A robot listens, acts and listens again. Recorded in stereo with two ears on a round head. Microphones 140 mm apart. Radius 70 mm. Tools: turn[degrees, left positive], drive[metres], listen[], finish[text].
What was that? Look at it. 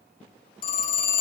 Thought: The phone ringing: about 55° left or 125° left.
Action: turn[55]
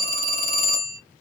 Thought: So it is at 65° left.
Action: turn[65]
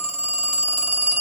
Action: finish[Found it: a phone ringing, straight ahead.]